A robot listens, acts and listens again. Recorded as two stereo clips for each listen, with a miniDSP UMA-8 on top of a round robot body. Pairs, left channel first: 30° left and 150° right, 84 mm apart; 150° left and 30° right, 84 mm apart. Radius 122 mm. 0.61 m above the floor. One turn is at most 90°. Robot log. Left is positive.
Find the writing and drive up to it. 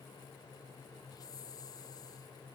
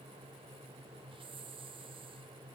cmd idle
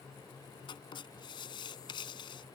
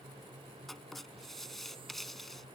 note: The writing: 60° left.
cmd yaw +60
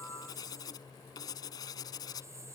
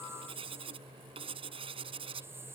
note: The writing is now 15° right.
cmd yaw -15
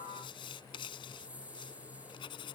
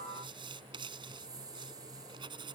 cmd fwd 1.0
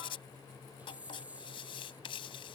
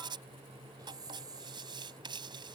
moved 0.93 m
cmd fwd 1.0
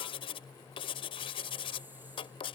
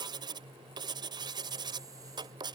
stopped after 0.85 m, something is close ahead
note: The writing is now 10° left.
cmd yaw +10
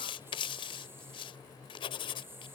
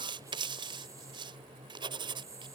end: Arrived at the writing, straight ahead.